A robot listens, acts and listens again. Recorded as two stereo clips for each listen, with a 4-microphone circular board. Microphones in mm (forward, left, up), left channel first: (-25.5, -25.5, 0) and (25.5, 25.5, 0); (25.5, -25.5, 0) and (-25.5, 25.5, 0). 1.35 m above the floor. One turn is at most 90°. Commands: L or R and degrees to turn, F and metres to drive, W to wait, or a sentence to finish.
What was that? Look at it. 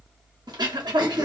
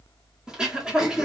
L55
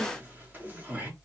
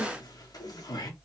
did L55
R20
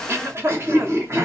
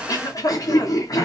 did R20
Facing the throat clearing, 1 to 2 m away.